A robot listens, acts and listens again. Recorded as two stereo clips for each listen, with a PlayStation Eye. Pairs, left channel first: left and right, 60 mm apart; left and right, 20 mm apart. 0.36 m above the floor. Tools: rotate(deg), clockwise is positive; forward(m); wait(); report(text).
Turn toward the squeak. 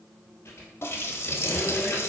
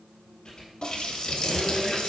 rotate(-45)
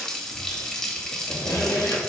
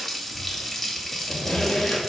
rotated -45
rotate(-85)
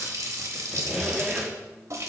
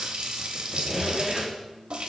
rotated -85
report("Facing the squeak, 2 to 4 m away.")